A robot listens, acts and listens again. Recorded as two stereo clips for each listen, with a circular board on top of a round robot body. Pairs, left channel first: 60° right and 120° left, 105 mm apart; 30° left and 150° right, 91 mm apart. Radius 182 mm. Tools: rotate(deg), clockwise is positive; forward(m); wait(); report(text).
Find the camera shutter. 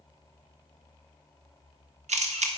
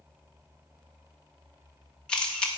rotate(-110)
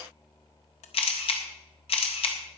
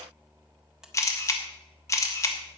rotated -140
rotate(30)
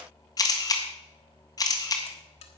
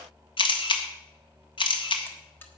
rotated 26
report("Facing the camera shutter.")